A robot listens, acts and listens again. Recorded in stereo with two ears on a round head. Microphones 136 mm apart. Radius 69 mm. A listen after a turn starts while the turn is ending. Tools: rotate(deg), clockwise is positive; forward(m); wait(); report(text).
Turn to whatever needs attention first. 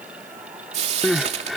rotate(-30)
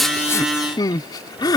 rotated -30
rotate(-150)
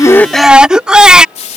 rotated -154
report("Facing the crying.")